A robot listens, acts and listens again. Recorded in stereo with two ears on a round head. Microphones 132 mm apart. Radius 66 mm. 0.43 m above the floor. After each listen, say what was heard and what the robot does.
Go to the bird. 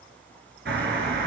Turn 90° right.
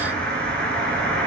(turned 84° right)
So it is at 10° left. Turn 10° left.
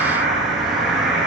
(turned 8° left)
Drive 1.0 m forward.
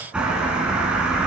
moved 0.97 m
Drive 1.0 m forward.
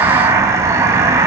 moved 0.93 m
The bird is now 20° right. Turn 20° right.
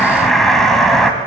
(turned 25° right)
Drive 1.0 m forward.
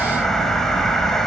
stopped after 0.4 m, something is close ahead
I am next to the bird.